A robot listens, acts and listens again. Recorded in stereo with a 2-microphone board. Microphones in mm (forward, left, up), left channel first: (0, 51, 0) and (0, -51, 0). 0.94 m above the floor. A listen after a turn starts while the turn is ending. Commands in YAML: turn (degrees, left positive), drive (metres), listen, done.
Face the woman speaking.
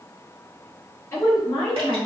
turn: 25
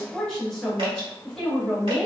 done: "Found it: a woman speaking, straight ahead."